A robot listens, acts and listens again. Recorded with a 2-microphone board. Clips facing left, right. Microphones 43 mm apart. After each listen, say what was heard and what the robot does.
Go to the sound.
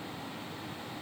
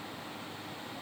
Keep listening.
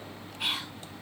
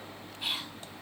The whispering: about 70° left or 110° left. Turn 70° left.
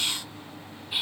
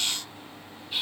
So it is at 15° left. Turn 15° left.
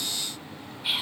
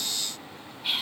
Drive 1.0 m forward.
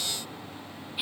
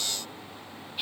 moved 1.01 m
The whispering is now 10° left. Turn 10° left.
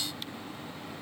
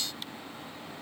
Keep listening.
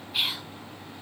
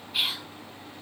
Drive 1.0 m forward.
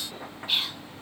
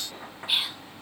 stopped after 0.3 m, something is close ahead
The whispering is now 10° right. Turn 10° right.
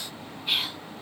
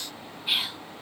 I am next to the whispering.